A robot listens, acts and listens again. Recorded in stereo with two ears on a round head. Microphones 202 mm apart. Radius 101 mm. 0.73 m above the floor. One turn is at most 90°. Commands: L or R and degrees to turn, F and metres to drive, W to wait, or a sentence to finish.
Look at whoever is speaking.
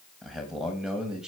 R30
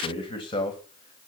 L20
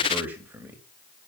R10
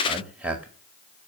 Found it: a man speaking, straight ahead.